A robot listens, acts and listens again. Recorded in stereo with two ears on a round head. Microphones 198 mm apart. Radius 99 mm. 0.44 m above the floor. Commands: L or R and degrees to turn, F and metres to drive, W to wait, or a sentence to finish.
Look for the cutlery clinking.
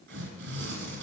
W
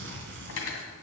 L70
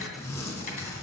W
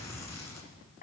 L40
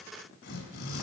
W
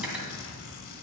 Found it: cutlery clinking, straight ahead.